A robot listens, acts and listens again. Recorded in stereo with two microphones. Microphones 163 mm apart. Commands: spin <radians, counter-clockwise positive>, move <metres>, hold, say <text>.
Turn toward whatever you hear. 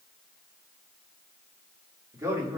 spin -0.26
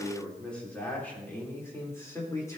spin 0.35
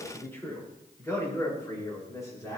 spin 0.35
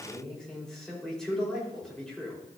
say Found it: a man speaking, straight ahead, over 4 m away.